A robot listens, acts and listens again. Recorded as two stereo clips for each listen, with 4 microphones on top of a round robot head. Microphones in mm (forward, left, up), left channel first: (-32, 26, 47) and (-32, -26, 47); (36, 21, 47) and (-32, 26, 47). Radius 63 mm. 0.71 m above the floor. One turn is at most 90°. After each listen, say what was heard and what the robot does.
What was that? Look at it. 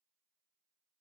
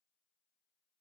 Keep listening.
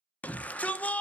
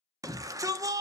The shout: 150° left. Turn 90° left.
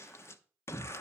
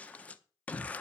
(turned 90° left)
The shout is now 65° left. Turn 65° left.
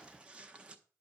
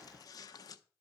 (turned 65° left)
Keep listening.
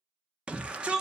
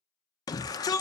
The shout is now 20° right. Turn 20° right.
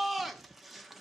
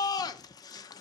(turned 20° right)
Found it: a shout, straight ahead.